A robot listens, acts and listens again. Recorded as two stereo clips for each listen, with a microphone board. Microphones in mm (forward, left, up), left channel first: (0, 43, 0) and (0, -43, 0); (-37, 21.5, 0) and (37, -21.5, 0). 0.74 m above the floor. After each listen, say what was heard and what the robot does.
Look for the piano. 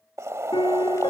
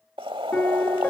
The piano: 75° left. Turn 75° left.
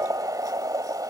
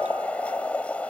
Keep listening.
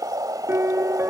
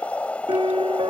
The piano is now 30° right. Turn 30° right.
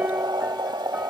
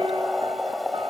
Keep listening.
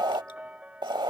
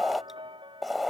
The piano is now 15° right. Turn 15° right.
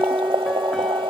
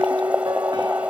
Found it: a piano, straight ahead.